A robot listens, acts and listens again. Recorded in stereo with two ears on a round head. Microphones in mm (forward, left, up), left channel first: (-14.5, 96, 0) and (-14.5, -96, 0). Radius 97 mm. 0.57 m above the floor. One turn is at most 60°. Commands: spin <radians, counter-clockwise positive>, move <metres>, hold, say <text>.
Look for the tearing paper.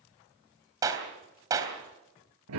hold
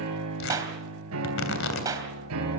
spin 1.05
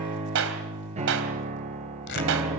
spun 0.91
spin 0.96
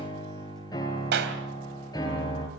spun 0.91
hold
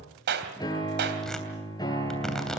hold
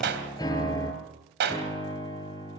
say Facing where the tearing paper came from. I can't hear it now.